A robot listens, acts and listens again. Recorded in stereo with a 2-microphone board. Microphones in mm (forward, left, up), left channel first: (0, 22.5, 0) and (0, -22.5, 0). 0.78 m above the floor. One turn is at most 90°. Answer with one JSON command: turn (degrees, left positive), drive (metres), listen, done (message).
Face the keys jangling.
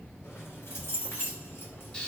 {"turn": 65}
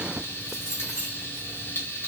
{"turn": -10}
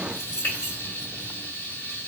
{"turn": -20}
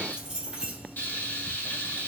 {"turn": -25}
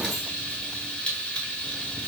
{"listen": true}
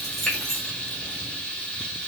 {"done": "Facing the keys jangling, 1 to 2 m away."}